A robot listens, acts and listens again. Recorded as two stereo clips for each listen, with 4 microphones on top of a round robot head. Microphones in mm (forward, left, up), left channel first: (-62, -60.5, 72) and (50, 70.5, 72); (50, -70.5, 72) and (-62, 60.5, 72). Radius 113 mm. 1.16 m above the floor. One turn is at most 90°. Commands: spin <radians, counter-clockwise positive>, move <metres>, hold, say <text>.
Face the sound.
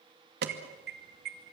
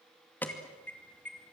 spin 0.52
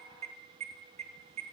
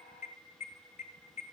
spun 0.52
say Found it: an alarm, straight ahead, 2 to 4 m away.